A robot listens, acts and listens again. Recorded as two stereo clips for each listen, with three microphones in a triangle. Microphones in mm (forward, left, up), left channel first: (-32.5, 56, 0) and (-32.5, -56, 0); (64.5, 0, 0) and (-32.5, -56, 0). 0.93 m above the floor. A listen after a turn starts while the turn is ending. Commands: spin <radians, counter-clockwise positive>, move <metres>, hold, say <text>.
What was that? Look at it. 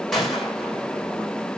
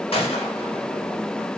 say Facing the gunshot.